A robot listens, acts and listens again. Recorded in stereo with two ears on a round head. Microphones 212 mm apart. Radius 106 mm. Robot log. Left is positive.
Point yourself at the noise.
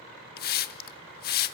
note: The hiss: about 40° left or 140° left.
cmd yaw +40
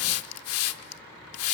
note: So it is at 90° left.
cmd yaw +90
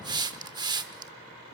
note: The hiss is now 20° right.
cmd yaw -20
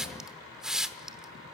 end: Found it: a hiss, straight ahead.